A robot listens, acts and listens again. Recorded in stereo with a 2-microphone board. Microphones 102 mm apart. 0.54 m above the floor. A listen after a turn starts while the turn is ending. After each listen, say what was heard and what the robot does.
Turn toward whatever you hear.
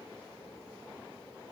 Keep listening.
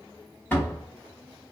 The door slam: about 20° left or 160° left. Turn 20° left.
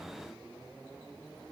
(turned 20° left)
Keep listening.
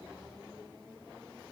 I heard a door slam, but can't make it out now. It was about straight ahead or 140° left.